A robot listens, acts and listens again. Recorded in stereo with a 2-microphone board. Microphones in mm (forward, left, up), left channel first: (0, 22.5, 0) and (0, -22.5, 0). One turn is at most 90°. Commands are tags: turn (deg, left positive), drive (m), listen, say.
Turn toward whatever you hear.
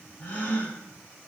<turn deg="60"/>
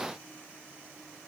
<listen/>
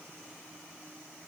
<say>I heard a gasp, but can't make it out now. It was about straight ahead or 60° left.</say>